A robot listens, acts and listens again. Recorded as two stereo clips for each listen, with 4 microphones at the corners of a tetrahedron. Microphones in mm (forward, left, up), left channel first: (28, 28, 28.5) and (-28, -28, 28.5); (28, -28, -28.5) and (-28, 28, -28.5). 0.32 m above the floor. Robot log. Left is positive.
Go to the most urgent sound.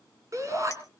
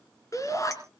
note: The shout: 90° right.
cmd yaw -90
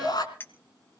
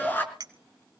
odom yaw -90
note: The shout is now 20° left.
cmd yaw +20
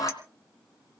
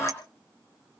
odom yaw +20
note: The shout is now 10° left.
cmd yaw +10
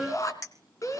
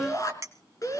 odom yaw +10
cmd fwd 1.0
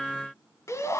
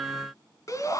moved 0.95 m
cmd fwd 1.0
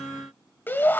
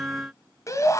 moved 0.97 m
note: The shout is now 15° right.
cmd yaw -15
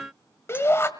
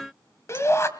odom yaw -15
cmd fwd 1.0
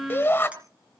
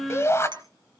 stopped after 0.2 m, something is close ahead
end: Arrived at the shout, straight ahead.